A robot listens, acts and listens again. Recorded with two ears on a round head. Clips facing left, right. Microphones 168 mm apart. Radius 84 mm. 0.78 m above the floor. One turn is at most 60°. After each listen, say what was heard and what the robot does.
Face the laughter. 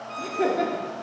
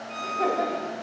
The laughter: about 30° left or 150° left. Turn 30° left.
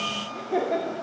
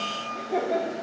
Found it: laughter, straight ahead, 1 to 2 m away.